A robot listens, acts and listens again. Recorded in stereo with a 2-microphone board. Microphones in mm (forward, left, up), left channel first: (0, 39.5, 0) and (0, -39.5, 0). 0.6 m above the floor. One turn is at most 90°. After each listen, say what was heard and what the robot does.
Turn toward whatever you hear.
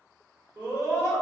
The scream: about 40° right or 140° right. Turn 40° right.
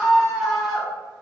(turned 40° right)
Facing the scream.